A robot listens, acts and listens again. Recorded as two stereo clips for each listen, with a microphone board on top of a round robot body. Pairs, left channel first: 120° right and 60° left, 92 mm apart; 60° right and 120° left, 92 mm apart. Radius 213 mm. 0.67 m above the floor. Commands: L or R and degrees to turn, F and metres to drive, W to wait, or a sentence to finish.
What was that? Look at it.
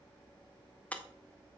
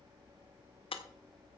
R45
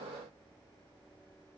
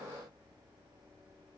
Facing where the breaking glass came from. I can't hear it now.